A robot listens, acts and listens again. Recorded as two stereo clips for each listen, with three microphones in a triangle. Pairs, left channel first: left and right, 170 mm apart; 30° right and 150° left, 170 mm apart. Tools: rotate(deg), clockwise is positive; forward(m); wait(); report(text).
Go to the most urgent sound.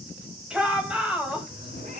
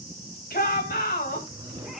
forward(1.0)
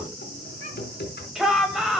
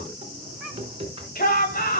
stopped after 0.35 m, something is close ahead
report("Something is in my way. I am facing the shout but have not reached it.")